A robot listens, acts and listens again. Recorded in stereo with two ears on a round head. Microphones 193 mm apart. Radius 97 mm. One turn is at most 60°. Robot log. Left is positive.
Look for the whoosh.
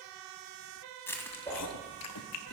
cmd yaw +30
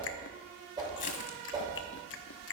note: So it is at 20° right.
cmd yaw -20
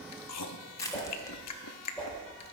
end: Found it: a whoosh, straight ahead.